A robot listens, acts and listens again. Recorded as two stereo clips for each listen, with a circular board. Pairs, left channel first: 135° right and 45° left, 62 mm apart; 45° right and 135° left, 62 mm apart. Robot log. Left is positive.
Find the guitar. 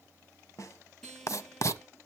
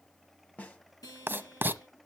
note: The guitar: 55° right.
cmd yaw -55
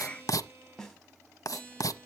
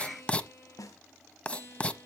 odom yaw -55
end: Facing the guitar, over 4 m away.